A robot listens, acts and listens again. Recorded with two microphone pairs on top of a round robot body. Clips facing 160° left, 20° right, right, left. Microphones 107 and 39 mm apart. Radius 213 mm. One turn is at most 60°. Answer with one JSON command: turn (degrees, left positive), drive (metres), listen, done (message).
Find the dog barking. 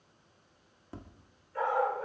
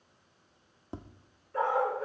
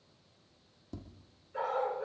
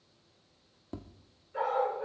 {"done": "Facing the dog barking, 2 to 4 m away."}